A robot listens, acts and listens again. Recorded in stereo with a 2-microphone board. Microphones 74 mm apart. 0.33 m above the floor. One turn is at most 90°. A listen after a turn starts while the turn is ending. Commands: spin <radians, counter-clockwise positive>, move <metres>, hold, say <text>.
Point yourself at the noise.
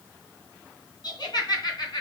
spin 1.22
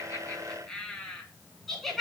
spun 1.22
say Facing the laughter, 2 to 4 m away.